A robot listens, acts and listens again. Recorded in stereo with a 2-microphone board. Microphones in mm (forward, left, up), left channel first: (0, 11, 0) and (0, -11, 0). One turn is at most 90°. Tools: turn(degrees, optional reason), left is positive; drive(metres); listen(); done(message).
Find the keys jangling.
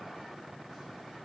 listen()
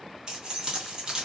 turn(degrees=-35, reason="The keys jangling: about 35° right or 145° right.")
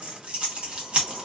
turn(degrees=-90, reason="So it is at 110° right.")
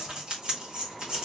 turn(degrees=-45, reason="The keys jangling is now 45° right.")
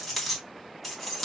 done("Found it: keys jangling, straight ahead, 1 to 2 m away.")